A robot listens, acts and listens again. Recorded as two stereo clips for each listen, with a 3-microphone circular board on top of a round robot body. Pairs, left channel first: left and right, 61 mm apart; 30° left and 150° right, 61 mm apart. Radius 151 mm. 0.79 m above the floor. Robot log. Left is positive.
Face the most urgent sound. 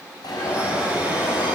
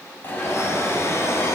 note: The alarm: 90° left.
cmd yaw +90
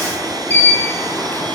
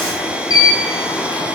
note: The alarm is now 30° left.
cmd yaw +30
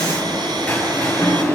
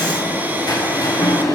note: The alarm is now 20° left.
cmd yaw +20
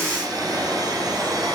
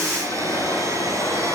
end: Facing the alarm, over 4 m away.